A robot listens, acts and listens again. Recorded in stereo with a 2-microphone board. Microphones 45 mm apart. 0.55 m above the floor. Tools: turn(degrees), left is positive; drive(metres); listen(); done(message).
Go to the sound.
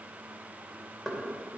turn(degrees=30)
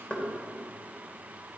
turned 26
turn(degrees=145)
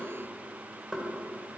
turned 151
drive(metres=1.0)
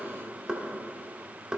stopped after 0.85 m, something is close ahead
turn(degrees=-20)
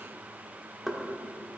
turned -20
done("Arrived at the knocking, straight ahead.")